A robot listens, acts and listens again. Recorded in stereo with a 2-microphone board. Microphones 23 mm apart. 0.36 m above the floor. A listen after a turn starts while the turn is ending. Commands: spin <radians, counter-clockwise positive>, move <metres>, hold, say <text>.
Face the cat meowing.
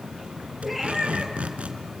spin -0.52
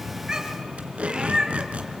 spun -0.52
spin -2.53
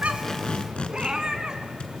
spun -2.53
spin -0.61
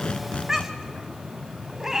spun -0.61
spin -0.26
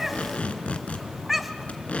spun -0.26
say Found it: a cat meowing, straight ahead, 1 to 2 m away.